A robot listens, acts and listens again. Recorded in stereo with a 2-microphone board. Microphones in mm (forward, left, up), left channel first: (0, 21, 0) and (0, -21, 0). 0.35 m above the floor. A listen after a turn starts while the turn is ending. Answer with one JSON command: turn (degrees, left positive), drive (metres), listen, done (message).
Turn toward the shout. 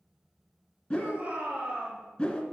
{"turn": -35}
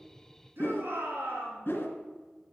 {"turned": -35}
{"turn": -105}
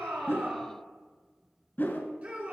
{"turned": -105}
{"turn": -35}
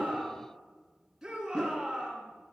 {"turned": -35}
{"turn": -10}
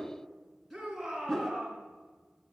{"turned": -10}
{"done": "Facing the shout."}